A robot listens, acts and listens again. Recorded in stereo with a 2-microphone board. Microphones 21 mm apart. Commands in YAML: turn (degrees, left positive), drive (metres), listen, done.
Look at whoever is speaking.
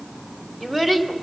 turn: 30
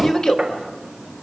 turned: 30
turn: 140
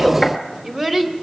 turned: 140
turn: -25
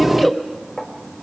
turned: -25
turn: -10
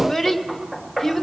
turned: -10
done: "Facing the child speaking, 2 to 4 m away."